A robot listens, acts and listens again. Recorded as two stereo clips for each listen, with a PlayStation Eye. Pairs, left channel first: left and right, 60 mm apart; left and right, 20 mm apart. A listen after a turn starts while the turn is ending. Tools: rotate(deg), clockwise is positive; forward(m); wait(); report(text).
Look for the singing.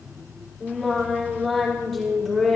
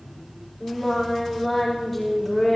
rotate(-30)
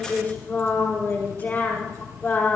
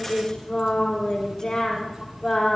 rotate(-150)
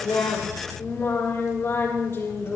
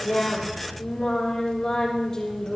rotate(-40)
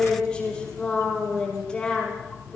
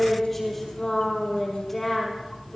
rotate(-15)
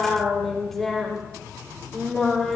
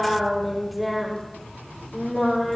report("Found it: singing, straight ahead, over 4 m away.")